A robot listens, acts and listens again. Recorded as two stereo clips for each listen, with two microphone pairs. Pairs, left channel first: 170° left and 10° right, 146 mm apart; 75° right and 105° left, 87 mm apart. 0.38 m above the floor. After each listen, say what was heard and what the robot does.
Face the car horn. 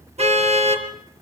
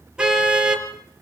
The car horn: 30° left. Turn 30° left.
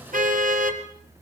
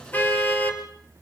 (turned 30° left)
Facing the car horn.